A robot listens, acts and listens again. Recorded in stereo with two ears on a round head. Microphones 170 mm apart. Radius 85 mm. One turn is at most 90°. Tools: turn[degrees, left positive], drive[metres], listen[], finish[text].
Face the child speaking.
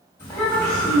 Action: turn[30]
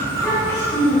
Action: turn[30]
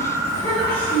Action: turn[30]
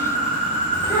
Action: listen[]
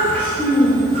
Action: turn[30]
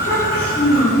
Thought: So it is at 150° left.
Action: turn[90]
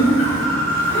Thought: The child speaking is now 35° left.
Action: turn[35]
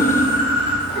Action: finish[Facing the child speaking.]